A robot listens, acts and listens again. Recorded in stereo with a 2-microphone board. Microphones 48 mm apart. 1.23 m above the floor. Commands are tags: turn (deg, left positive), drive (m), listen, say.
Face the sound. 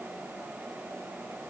<listen/>
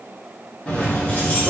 <turn deg="35"/>
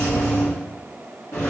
<turn deg="100"/>
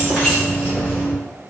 <turn deg="15"/>
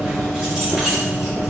<say>Facing the keys jangling.</say>